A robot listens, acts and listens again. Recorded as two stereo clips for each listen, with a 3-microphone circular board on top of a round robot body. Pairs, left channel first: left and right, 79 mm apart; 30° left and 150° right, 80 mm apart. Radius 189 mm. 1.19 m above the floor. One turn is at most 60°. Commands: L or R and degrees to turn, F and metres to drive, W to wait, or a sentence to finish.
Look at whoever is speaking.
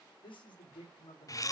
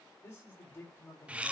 L60
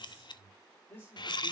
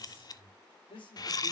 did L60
L20
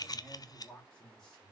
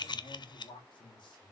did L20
Facing the man speaking.